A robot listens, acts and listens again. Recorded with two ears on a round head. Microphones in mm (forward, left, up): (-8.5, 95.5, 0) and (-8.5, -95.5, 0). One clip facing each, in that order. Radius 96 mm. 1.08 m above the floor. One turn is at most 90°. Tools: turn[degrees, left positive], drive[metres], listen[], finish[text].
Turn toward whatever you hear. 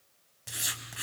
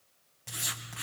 Action: turn[30]
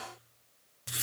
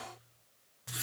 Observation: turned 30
Thought: So it is at 140° left.
Action: turn[90]
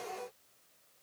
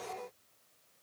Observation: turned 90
Thought: Nothing new. It was at 50° left.
Action: turn[50]
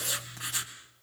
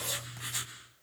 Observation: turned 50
Action: finish[Facing the writing.]